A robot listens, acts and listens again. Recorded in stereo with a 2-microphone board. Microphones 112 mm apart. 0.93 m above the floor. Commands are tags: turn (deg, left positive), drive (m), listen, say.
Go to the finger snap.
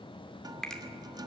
<turn deg="30"/>
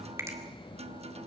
<turn deg="-25"/>
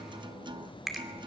<drive m="1.0"/>
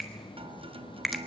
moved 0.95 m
<drive m="1.0"/>
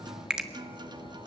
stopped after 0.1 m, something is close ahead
<say>I am next to the finger snap.</say>